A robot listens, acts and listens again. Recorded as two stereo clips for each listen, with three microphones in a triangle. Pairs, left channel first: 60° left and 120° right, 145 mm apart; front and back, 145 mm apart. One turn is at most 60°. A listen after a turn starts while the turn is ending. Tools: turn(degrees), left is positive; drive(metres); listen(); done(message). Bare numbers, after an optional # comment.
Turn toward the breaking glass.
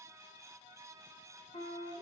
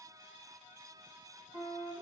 listen()
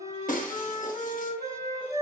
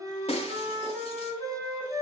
# The breaking glass: 45° left.
turn(45)
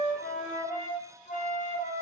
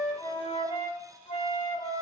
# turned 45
done("I heard breaking glass from this way, but can't make it out now.")